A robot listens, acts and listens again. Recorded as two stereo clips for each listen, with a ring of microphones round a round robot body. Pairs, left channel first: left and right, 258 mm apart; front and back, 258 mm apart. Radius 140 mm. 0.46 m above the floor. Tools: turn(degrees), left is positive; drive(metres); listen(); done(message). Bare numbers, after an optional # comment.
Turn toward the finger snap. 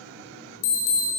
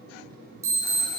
listen()
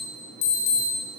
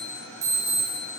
listen()
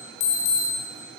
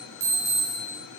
done("I can't make out a finger snap, only an alarm.")